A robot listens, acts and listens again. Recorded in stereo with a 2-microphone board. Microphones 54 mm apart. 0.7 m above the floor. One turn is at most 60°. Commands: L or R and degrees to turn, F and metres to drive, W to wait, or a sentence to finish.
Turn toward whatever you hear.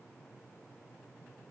W
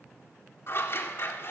L50
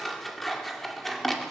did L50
Found it: scissors, straight ahead.